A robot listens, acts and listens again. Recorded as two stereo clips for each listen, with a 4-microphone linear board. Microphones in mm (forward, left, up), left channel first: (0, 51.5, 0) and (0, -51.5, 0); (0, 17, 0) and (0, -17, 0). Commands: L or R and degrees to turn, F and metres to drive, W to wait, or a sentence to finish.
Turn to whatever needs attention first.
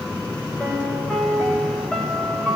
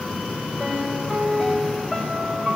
W
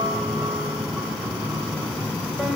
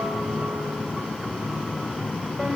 W
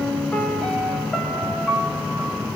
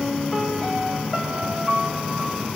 I can't make out anything urgent, only a piano.